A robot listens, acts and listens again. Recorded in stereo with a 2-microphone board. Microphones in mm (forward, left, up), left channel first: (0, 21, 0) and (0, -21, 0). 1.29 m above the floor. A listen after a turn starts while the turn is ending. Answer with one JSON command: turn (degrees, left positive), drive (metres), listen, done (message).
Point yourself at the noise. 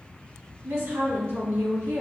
{"turn": -90}
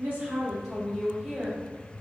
{"done": "Found it: a woman speaking, straight ahead, 2 to 4 m away."}